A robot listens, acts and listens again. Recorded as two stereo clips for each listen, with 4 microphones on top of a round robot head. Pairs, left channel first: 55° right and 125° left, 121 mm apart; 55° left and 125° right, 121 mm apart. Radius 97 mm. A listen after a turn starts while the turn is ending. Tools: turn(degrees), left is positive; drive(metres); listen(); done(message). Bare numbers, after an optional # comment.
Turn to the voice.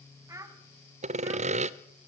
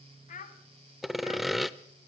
# The child speaking: 60° left.
turn(60)
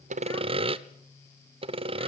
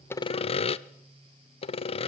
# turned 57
listen()
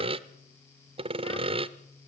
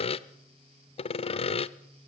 listen()
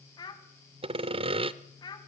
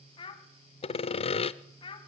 done("Found it: a child speaking, straight ahead, 2 to 4 m away.")